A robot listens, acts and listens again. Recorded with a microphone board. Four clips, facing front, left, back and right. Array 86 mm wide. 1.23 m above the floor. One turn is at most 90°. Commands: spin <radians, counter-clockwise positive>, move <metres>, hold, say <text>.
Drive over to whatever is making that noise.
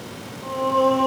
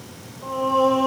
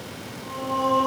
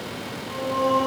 spin 0.96
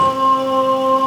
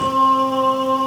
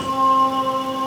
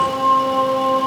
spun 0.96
spin 0.35
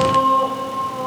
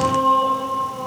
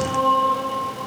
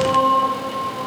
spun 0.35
move 1.0
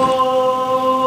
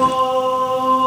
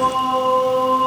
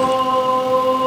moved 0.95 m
move 1.0
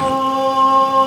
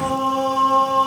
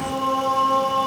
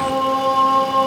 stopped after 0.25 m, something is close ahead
spin -0.26
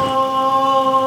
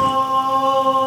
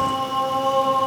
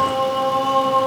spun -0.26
say Arrived at the singing, straight ahead.